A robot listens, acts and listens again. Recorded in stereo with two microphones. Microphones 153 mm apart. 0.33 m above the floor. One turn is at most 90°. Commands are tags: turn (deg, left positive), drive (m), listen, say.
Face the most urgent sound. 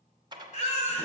<turn deg="50"/>
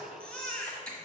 <turn deg="10"/>
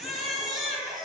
<say>Found it: a baby crying, straight ahead, 1 to 2 m away.</say>